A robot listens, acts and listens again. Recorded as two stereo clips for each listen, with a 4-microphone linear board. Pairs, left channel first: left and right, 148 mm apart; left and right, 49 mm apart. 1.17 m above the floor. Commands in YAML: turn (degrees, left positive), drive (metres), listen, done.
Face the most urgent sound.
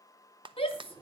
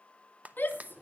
turn: 40
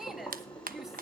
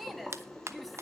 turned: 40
listen: true
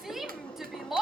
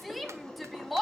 done: "Facing the shout."